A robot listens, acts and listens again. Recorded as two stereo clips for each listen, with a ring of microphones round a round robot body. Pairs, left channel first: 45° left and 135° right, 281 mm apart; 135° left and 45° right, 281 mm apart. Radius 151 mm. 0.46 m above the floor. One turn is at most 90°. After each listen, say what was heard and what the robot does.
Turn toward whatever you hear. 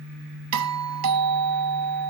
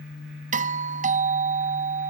The doorbell: 110° right. Turn 90° right.
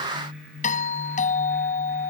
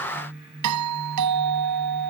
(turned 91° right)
The doorbell is now 20° right. Turn 20° right.
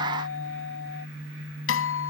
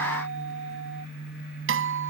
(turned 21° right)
Found it: a doorbell, straight ahead.